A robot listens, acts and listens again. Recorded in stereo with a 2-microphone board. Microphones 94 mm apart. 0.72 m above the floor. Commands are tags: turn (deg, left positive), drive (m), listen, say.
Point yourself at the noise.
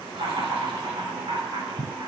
<turn deg="-70"/>
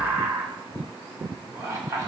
<turn deg="-35"/>
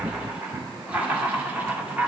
<turn deg="-15"/>
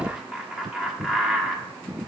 <say>Found it: laughter, straight ahead, 1 to 2 m away.</say>